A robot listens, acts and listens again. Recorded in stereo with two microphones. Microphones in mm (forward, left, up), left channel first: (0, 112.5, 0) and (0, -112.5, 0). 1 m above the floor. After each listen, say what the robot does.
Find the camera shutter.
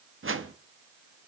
Keep listening.
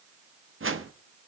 Keep listening.
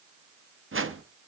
I can't make out a camera shutter to turn to.